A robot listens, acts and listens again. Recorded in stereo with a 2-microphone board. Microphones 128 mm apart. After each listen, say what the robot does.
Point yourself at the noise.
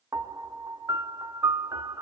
Turn 25° right.
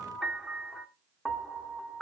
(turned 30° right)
Facing the piano, under 1 m away.